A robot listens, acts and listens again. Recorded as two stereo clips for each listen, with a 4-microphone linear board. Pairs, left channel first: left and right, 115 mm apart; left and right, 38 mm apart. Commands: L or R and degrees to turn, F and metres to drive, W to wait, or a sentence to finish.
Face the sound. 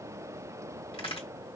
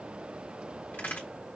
L55
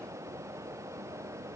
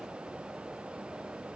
W
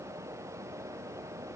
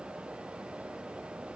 I heard a crack, but can't make it out now. It was about straight ahead or 70° left.